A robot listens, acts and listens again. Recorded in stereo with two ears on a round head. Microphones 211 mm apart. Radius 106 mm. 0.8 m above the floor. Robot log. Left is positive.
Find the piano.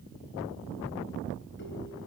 cmd idle
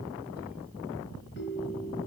cmd idle
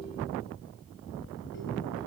end: I can't make out a piano to turn to.